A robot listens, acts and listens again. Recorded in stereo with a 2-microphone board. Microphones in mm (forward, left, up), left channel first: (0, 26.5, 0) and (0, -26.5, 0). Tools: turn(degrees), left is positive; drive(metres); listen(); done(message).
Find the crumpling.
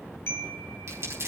turn(degrees=-60)
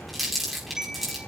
done("Found it: crumpling, straight ahead.")